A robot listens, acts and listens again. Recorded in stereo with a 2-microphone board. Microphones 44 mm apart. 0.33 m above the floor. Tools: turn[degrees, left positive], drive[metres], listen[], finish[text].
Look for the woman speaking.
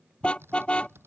Action: listen[]
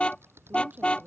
Thought: The woman speaking: about 30° right or 150° right.
Action: turn[-30]
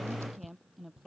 Action: finish[Found it: a woman speaking, straight ahead.]